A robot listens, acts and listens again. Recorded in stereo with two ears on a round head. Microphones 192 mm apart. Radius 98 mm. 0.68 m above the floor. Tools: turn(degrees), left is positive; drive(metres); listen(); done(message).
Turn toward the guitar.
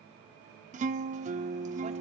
turn(degrees=-35)
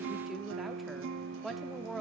turn(degrees=-105)
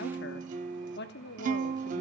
turn(degrees=-40)
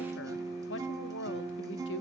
turn(degrees=-15)
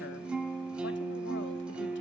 done("Found it: a guitar, straight ahead.")